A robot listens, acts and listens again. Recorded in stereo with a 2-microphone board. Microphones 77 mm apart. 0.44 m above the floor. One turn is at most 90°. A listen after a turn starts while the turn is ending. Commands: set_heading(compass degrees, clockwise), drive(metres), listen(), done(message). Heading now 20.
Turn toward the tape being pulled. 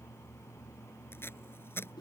set_heading(350)
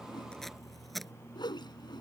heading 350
done("Facing the tape being pulled.")